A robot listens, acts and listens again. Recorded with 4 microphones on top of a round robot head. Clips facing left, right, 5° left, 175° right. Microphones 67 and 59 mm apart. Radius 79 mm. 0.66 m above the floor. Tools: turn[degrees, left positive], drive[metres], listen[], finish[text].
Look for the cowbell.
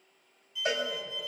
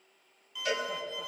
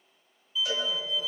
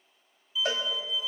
Thought: The cowbell: 150° left.
Action: turn[150]
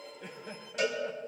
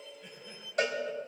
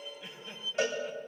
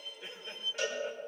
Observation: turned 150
Thought: The cowbell is now 45° right.
Action: turn[-45]
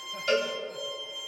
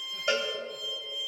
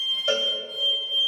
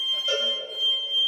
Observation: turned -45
Thought: The cowbell is now 20° right.
Action: turn[-20]
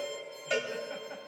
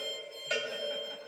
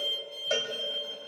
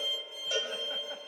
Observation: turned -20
Action: finish[Facing the cowbell, 2 to 4 m away.]